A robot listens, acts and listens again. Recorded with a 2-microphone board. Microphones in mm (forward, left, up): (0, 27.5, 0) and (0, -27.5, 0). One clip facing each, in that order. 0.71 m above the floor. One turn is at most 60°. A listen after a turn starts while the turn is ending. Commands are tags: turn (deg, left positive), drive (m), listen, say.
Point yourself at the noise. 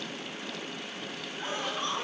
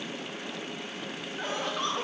<turn deg="-60"/>
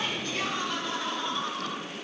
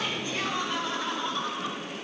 <say>Facing the laughter, 2 to 4 m away.</say>